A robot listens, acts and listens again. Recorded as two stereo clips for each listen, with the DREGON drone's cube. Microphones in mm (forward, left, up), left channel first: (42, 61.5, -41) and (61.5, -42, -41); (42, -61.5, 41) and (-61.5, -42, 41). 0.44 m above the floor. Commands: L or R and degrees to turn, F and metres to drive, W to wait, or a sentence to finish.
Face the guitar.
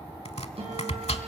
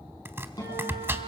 R60
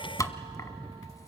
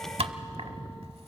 W
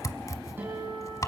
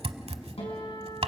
R10
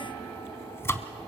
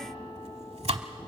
W
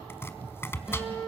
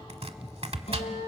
Facing the guitar.